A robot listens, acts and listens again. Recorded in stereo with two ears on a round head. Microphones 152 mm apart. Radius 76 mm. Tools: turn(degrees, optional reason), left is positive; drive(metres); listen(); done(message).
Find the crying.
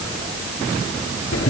listen()
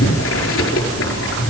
listen()
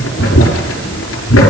done("I can't make out crying, only boiling.")